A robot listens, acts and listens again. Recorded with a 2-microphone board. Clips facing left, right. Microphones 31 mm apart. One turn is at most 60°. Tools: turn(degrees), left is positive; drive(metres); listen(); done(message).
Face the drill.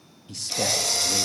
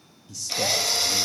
turn(degrees=-15)
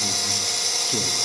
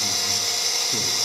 done("Found it: a drill, straight ahead, under 1 m away.")